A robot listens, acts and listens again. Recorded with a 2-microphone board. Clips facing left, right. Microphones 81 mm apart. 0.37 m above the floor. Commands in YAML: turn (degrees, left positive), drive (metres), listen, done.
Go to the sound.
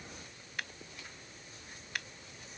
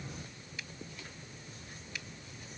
turn: 60
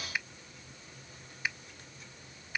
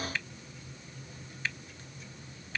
turn: 15
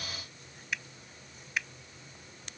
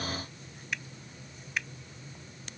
drive: 1.0
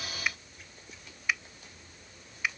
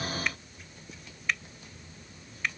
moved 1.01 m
turn: 10
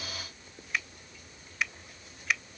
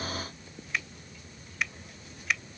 drive: 1.0
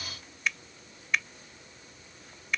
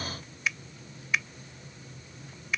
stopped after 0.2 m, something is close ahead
done: "Arrived at the finger snap, straight ahead."